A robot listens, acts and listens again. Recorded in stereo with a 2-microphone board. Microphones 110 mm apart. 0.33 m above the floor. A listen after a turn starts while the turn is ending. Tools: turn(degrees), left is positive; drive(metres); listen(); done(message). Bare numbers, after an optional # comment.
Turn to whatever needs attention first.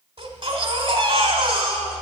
# The baby crying: about 50° right or 130° right.
turn(-50)
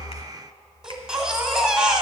done("Facing the baby crying, 1 to 2 m away.")